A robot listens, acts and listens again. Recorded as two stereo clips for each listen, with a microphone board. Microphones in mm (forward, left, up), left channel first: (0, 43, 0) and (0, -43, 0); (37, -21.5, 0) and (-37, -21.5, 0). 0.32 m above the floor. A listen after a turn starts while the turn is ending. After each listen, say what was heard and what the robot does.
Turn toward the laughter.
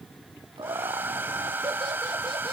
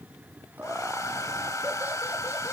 The laughter: 115° right. Turn 115° right.
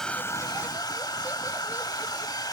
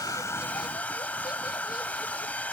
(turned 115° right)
Keep listening.
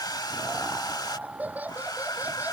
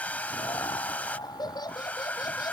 The laughter is now 20° right. Turn 20° right.
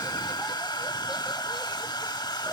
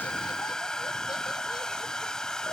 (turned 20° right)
Keep listening.
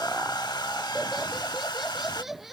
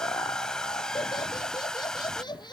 Facing the laughter.